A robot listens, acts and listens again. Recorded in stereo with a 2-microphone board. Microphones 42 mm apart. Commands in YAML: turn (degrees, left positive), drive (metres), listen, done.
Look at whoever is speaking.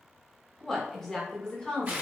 turn: 15
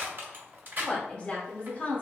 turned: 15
turn: 35
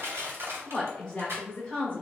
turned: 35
turn: 25
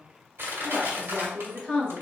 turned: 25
done: "Found it: a woman speaking, straight ahead."